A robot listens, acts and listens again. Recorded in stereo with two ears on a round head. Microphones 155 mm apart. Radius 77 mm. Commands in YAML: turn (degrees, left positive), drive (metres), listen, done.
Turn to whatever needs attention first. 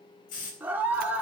turn: -30
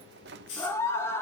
turn: 15
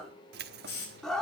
done: "Found it: a scream, straight ahead."